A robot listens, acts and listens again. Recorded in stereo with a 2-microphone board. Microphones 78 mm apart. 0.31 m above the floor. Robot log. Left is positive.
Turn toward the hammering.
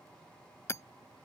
note: The hammering: about 35° left or 145° left.
cmd yaw +35
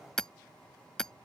note: So it is at 10° left.
cmd yaw +10
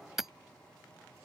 end: Found it: hammering, straight ahead.